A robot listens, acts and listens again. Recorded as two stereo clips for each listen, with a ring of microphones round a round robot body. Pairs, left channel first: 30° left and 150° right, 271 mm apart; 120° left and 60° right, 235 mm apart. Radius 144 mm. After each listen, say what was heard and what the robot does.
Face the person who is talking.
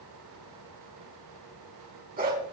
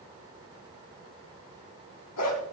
Keep listening.
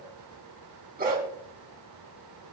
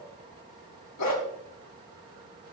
Keep listening.
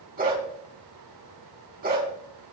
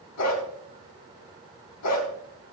I can't make out anyone speaking to turn to.